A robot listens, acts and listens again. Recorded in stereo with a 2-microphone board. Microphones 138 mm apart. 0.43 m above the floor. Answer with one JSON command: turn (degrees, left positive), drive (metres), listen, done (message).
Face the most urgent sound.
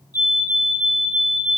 {"turn": 25}
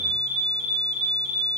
{"done": "Found it: a fire alarm, straight ahead, 2 to 4 m away."}